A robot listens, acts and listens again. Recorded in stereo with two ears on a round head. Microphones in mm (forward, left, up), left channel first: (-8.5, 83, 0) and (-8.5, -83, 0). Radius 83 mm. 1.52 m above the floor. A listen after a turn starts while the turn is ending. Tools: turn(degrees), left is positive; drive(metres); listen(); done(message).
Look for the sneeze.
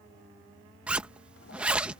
listen()
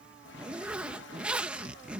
listen()
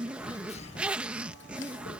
turn(degrees=35)
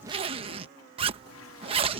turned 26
listen()
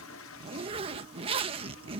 done("I heard a sneeze, but can't make it out now. It was about 10° left or 120° left.")